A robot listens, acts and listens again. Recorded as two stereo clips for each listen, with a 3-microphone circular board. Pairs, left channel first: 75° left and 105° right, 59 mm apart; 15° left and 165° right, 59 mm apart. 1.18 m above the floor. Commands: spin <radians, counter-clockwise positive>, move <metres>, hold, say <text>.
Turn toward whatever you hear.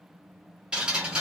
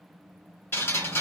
spin -0.52
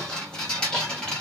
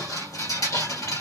say Found it: dripping, straight ahead.